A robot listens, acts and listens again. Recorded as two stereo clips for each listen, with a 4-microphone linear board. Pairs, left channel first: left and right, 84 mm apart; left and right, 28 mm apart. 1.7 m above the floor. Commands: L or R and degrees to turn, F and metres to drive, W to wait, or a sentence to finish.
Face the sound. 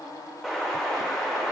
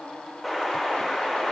L30
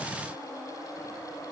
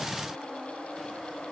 W
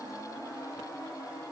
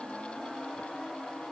I heard an explosion, but can't make it out now. It was about 30° right or 150° left.